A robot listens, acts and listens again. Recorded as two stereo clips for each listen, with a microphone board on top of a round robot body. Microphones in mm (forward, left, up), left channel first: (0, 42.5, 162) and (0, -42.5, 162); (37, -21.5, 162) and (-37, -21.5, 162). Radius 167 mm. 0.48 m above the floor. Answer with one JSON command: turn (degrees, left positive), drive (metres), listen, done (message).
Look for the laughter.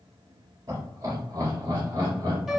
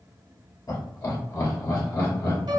{"turn": -40}
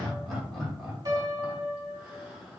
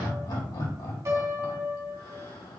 {"done": "Found it: laughter, straight ahead."}